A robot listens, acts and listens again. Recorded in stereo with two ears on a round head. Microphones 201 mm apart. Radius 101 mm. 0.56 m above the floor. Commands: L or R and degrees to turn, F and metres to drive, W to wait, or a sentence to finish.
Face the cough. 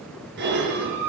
W
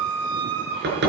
W
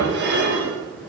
I can't make out a cough to turn to.